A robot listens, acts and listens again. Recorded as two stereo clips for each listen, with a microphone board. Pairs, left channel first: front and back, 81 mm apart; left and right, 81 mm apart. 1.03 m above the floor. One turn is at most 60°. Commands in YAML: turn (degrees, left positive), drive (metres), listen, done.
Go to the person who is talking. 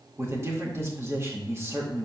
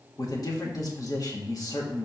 turn: 60
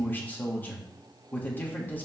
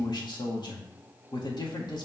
turn: 60
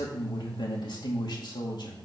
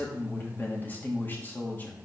turn: 25
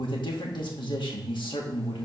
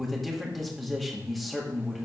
drive: 1.0
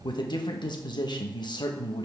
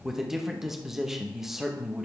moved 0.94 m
drive: 1.0
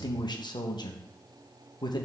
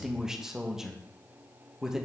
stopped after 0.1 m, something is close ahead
turn: -10
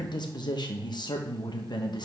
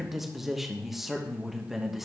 done: "I am next to the man speaking."